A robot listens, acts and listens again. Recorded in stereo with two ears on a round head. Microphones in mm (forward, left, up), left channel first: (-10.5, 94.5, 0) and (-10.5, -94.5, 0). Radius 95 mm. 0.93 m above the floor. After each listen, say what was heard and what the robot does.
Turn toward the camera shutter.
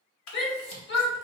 The camera shutter: about 70° left or 110° left. Turn 70° left.
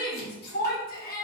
Keep listening.
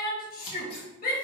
Keep listening.
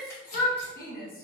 I heard a camera shutter, but can't make it out now. It was about straight ahead or 40° left.